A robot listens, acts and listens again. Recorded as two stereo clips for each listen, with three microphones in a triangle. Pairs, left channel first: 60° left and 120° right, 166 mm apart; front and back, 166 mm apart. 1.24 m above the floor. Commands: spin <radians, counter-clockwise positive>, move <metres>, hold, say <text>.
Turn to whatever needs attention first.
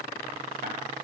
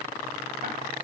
hold
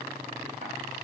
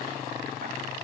hold
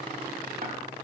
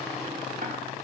say I can't make out anything urgent to turn to.